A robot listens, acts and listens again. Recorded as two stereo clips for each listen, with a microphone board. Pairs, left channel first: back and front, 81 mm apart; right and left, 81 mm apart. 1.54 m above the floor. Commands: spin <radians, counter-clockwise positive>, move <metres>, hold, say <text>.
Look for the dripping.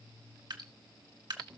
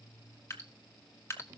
spin -0.52
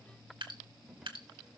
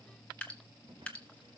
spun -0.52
spin -0.26
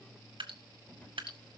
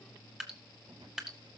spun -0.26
say Found it: dripping, straight ahead, 1 to 2 m away.